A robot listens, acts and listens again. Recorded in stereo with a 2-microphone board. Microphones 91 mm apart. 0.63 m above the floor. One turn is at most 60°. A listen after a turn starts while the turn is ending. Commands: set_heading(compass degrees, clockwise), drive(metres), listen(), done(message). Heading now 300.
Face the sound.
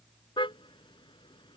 set_heading(240)
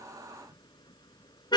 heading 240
set_heading(185)
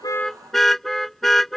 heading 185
done("Facing the car horn.")